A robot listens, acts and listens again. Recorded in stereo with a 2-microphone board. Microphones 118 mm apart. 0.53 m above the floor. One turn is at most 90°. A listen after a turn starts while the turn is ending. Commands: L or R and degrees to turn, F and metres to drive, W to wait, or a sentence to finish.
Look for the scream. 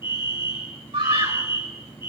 R50
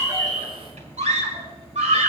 R75
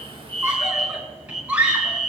R10
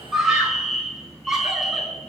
Facing the scream.